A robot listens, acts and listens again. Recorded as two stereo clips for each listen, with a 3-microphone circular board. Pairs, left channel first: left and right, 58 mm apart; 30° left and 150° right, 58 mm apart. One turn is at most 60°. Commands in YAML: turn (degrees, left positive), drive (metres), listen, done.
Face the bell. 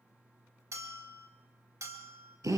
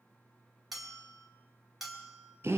turn: -60
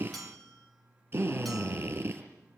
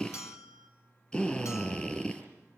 done: "Facing the bell, over 4 m away."